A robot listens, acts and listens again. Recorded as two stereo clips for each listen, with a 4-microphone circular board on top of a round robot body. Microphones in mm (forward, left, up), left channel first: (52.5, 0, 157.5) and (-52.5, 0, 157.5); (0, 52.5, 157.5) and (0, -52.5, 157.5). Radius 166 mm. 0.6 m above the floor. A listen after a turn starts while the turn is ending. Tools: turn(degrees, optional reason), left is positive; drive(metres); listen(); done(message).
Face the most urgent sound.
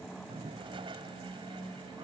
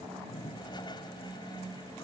listen()
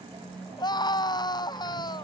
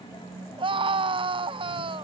turn(degrees=-50, reason="The scream: 50° right.")
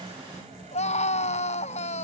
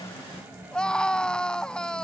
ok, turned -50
done("Facing the scream.")